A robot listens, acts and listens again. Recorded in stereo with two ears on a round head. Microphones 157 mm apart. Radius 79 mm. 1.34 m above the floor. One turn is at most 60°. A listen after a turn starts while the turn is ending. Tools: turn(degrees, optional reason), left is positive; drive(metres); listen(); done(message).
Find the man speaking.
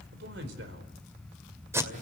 turn(degrees=-60, reason="The man speaking: about 65° right or 115° right.")
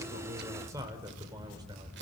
turn(degrees=-25, reason="So it is at 25° right.")
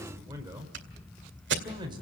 turn(degrees=-25, reason="The man speaking is now 25° right.")
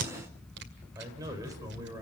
turn(degrees=-20, reason="The man speaking is now 20° right.")
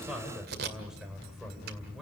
done("Facing the man speaking, over 4 m away.")